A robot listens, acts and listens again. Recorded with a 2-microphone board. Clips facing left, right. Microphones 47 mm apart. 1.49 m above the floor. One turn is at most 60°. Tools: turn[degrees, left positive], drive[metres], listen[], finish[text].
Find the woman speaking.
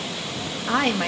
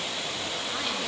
Thought: The woman speaking: about 55° left or 125° left.
Action: turn[55]
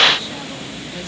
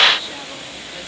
Action: listen[]
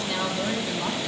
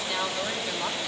Action: finish[Found it: a woman speaking, straight ahead, 2 to 4 m away.]